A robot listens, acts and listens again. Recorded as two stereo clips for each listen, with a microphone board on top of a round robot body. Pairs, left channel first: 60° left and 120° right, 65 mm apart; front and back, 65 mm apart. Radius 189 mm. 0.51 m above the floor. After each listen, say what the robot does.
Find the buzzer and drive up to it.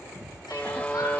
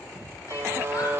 Turn 125° left.
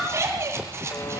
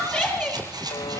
Keep listening.
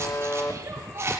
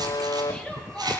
Drive 1.0 m forward.
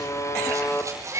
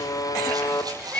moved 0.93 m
Turn 20° left.
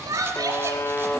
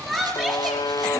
Drive 1.0 m forward.
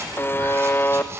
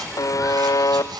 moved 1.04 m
Turn 10° left.
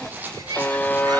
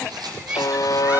Drive 1.0 m forward.
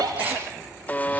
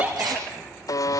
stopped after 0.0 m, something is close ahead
I am next to the buzzer.